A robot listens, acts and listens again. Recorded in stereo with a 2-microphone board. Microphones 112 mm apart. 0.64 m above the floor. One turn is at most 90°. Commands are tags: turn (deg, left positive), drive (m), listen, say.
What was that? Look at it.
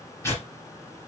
<turn deg="20"/>
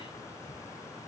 <listen/>
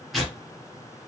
<say>Found it: tearing paper, straight ahead.</say>